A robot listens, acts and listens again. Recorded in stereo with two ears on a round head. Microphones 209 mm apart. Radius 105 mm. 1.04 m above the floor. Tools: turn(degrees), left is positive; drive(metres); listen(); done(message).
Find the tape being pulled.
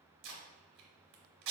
turn(degrees=-55)
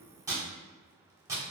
turn(degrees=-15)
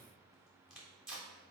done("Facing the tape being pulled.")